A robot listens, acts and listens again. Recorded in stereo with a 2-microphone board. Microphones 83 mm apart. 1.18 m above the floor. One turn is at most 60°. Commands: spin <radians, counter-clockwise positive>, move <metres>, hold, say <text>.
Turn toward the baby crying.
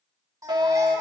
spin -0.70
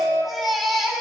say Facing the baby crying, over 4 m away.